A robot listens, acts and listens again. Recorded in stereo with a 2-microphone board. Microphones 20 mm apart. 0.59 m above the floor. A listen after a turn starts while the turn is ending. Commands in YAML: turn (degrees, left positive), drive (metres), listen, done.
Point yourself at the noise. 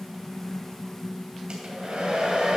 turn: -50
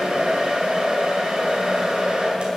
turn: -75
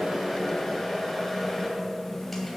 done: "Facing the hair dryer."